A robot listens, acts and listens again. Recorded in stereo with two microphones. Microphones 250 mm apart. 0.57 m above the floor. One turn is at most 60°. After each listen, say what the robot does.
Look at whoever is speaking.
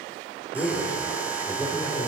Turn 30° left.
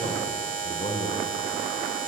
Turn 60° left.
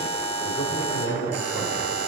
Turn 60° left.
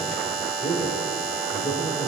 Turn 35° left.
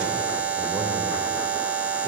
Keep listening.
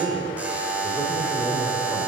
Found it: a man speaking, straight ahead.